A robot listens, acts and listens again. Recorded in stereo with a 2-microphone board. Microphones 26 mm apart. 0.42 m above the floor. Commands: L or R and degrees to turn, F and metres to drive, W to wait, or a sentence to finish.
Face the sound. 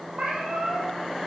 R55
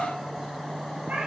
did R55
R65
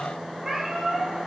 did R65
Facing the cat meowing, 2 to 4 m away.